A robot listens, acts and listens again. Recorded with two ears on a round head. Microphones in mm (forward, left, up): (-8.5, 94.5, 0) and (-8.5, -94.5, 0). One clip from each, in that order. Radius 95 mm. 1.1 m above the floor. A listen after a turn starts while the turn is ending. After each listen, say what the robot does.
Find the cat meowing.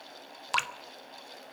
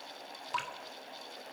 Keep listening.
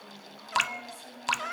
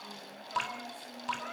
Turn 55° left.
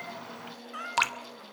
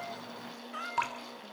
Found it: a cat meowing, straight ahead, 1 to 2 m away.